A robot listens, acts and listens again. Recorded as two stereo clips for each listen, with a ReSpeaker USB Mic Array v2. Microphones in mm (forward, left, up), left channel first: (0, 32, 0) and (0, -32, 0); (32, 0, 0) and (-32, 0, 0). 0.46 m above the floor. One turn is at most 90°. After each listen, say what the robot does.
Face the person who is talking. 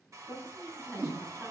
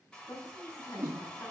Turn 35° right.
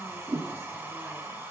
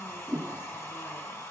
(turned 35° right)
Keep listening.
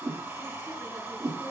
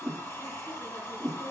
Keep listening.
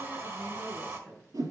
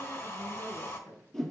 Facing the woman speaking.